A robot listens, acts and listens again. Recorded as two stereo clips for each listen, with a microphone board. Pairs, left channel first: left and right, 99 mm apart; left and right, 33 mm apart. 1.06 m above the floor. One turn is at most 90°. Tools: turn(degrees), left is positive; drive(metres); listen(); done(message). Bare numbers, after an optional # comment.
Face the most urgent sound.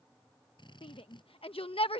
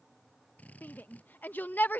# The shout: about 70° left or 110° left.
turn(70)
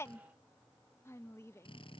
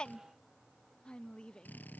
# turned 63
# So it is at 30° left.
turn(30)
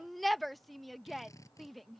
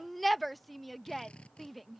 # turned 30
done("Found it: a shout, straight ahead.")